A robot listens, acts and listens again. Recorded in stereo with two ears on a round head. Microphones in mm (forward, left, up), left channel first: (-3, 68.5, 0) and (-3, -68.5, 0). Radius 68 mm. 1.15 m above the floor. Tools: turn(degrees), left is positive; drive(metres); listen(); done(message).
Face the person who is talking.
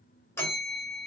listen()
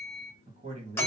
turn(degrees=-40)
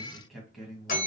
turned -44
done("Facing the man speaking, 1 to 2 m away.")